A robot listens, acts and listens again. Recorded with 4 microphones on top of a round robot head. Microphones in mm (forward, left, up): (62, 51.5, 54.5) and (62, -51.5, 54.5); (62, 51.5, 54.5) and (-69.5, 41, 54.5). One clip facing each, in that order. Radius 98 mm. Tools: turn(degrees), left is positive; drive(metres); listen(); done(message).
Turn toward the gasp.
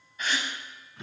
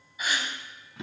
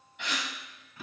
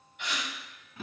turn(degrees=-10)
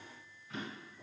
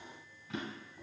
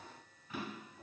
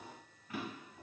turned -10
done("Facing where the gasp came from. I can't hear it now.")